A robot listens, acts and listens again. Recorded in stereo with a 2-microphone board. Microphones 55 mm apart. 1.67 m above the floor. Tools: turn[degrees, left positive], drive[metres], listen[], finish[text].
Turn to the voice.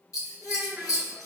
Thought: The child speaking: about 25° right or 155° right.
Action: turn[-25]
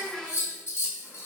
Action: finish[Found it: a child speaking, straight ahead.]